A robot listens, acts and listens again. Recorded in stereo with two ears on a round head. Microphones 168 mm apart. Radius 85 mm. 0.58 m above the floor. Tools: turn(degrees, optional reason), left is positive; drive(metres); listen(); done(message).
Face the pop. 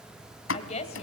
turn(degrees=70, reason="The pop: about 70° left or 110° left.")
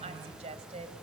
listen()
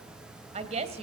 done("I heard a pop, but can't make it out now. It was about straight ahead or 40° left.")